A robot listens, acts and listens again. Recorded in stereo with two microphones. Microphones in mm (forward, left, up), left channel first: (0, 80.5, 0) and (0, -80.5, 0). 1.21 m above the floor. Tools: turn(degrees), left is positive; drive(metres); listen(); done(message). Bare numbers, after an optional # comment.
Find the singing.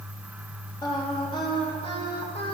# The singing: about 35° left or 145° left.
turn(35)
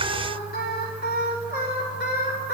# So it is at 100° left.
turn(100)
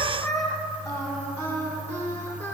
# The singing is now 15° left.
turn(15)
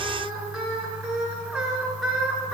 done("Found it: singing, straight ahead, 2 to 4 m away.")